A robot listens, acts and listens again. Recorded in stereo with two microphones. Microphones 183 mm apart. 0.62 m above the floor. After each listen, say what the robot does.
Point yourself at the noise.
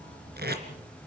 Turn 65° right.
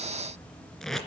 Facing the tape being pulled.